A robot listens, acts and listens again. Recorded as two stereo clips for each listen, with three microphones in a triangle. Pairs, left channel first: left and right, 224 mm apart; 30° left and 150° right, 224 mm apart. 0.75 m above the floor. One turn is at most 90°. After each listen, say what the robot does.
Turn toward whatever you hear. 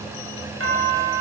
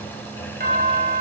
Turn 90° right.
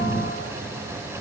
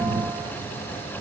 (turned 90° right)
Turn 10° right.
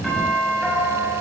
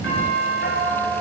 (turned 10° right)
Found it: a doorbell, straight ahead.